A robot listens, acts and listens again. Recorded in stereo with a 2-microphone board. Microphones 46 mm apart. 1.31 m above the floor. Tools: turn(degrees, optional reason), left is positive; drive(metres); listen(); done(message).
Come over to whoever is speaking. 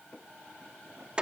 listen()
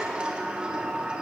listen()
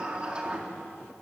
done("I can't make out anyone speaking, only a sliding door.")